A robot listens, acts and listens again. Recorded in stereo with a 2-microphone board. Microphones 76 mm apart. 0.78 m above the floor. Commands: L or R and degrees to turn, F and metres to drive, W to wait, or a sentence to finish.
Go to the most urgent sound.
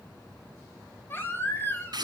L30
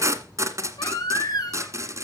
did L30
L120
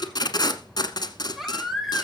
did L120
F1.0
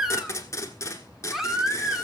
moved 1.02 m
F1.0
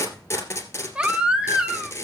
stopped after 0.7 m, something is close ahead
R15
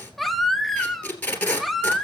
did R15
I am next to the baby crying.